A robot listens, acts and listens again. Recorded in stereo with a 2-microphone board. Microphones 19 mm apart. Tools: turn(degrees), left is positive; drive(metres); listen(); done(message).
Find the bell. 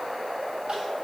listen()
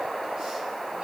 listen()
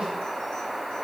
done("I can't make out a bell to turn to.")